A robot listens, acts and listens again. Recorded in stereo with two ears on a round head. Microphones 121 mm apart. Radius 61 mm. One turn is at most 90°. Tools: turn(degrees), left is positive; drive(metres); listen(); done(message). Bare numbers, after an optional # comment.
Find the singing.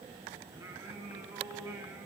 # The singing: about 25° right or 155° right.
turn(-25)
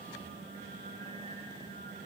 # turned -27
# So it is at 135° right.
turn(-90)
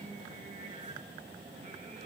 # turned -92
# Nothing new. It was at 40° right.
turn(-40)
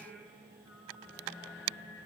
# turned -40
# The singing is now 10° right.
turn(-10)
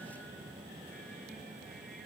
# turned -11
listen()
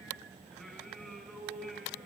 done("Found it: singing, straight ahead, over 4 m away.")